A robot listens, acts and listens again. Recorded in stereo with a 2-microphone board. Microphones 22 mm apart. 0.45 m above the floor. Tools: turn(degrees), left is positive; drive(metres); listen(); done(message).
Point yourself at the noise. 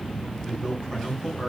turn(degrees=25)
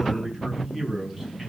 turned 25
done("Found it: a man speaking, straight ahead, over 4 m away.")